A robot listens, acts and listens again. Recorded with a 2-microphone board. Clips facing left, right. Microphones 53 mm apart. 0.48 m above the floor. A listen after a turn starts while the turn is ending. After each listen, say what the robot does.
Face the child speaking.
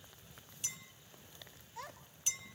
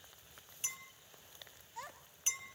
Turn 30° left.
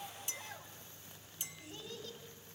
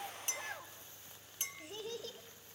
Turn 65° right.
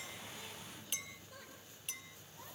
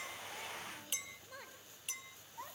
Turn 35° right.
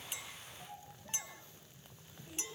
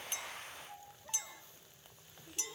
Found it: a child speaking, straight ahead, 2 to 4 m away.